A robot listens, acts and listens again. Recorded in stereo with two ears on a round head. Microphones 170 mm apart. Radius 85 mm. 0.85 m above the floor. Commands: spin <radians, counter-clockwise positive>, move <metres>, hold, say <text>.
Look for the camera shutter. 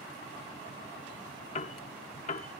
hold
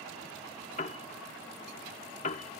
hold
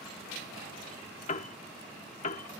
say I can't make out a camera shutter to turn to.